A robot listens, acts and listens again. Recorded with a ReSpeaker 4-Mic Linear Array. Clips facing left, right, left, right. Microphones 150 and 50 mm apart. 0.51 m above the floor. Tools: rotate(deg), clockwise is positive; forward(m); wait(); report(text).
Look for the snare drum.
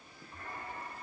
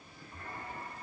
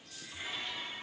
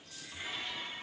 wait()
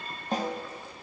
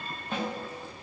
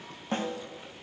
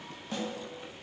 rotate(-40)
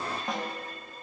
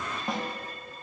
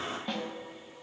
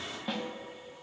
report("Facing the snare drum.")